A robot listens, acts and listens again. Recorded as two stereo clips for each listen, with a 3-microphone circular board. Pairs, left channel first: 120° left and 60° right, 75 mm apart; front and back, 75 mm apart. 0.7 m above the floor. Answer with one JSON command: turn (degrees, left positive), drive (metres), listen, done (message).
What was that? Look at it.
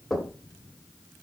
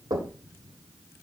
{"turn": -155}
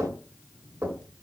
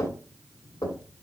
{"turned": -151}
{"done": "Facing the knocking, 1 to 2 m away."}